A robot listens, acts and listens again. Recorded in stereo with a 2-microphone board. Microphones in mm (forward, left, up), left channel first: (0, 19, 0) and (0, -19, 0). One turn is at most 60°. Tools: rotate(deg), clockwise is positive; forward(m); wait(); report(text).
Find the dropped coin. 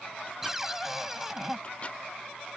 wait()
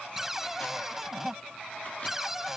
wait()
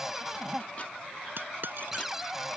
rotate(60)
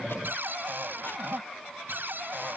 wait()
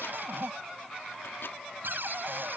report("I heard a dropped coin, but can't make it out now. It was about 5° right or 55° right.")